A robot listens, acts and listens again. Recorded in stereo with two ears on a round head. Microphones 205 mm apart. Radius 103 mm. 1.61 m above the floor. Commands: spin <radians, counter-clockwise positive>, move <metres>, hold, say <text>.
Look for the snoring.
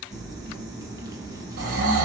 spin -1.13
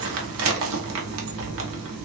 hold
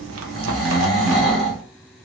say Facing the snoring.